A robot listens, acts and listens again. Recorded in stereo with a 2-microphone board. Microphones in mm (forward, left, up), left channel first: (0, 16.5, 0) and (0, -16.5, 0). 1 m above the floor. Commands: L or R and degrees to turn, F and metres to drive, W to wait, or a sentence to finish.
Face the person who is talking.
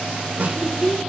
L30
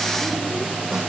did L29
W
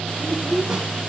L115
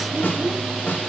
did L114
W
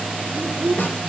Found it: a child speaking, straight ahead.